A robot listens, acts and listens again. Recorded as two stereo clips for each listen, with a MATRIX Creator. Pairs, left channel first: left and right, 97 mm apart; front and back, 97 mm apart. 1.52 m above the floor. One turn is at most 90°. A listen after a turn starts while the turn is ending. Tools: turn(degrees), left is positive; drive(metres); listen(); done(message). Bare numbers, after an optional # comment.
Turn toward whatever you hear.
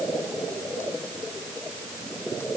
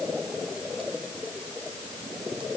listen()
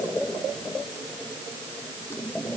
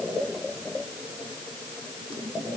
listen()
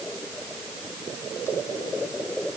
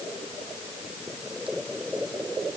done("I can't make out anything.")